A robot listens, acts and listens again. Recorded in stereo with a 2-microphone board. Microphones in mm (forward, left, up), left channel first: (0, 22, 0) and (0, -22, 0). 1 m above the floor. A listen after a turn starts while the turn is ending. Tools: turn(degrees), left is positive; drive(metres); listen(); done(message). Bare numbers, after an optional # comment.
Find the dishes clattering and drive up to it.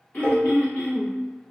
# The dishes clattering: about 45° right or 135° right.
turn(-45)
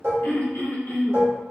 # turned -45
# So it is at 85° right.
turn(-85)
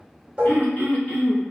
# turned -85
listen()
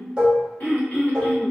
# The dishes clattering is now 25° right.
turn(-25)
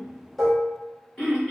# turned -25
drive(1.0)
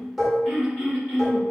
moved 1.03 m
# The dishes clattering is now 10° right.
turn(-10)
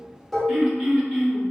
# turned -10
drive(1.0)
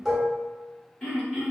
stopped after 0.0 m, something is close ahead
# The dishes clattering is now 10° right.
turn(-10)
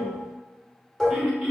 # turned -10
done("I am next to the dishes clattering.")